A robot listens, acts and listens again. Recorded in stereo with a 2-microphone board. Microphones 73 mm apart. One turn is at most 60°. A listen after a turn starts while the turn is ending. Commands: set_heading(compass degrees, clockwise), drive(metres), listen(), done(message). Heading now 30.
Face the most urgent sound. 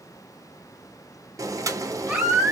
set_heading(50)
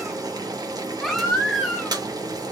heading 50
done("Found it: a baby crying, straight ahead.")